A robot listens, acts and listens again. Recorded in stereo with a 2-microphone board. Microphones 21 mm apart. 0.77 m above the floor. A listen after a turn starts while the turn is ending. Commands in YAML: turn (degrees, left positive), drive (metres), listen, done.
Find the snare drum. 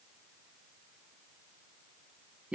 listen: true
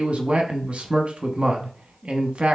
listen: true
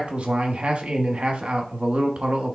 done: "I can't make out a snare drum, only a man speaking."